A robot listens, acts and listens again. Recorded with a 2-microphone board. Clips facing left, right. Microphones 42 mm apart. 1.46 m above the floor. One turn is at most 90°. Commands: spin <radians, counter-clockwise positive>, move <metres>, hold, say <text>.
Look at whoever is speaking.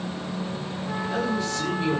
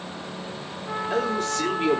spin -0.87
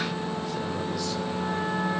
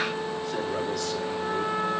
hold
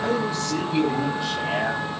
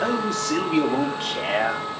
spin -1.22
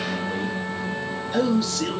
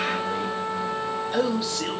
spin -0.17
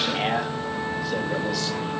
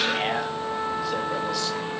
say Found it: a man speaking, straight ahead.